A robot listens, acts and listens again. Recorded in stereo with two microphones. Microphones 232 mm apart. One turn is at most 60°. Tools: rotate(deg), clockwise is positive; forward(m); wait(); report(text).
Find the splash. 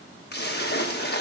rotate(-45)
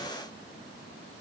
wait()
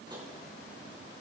report("I heard a splash, but can't make it out now. It was about straight ahead or 90° left.")